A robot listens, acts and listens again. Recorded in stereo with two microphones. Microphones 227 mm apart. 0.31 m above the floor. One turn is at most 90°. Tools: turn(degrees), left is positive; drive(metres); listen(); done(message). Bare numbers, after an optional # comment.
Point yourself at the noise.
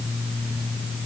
listen()
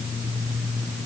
listen()
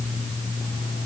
done("I can't make out anything.")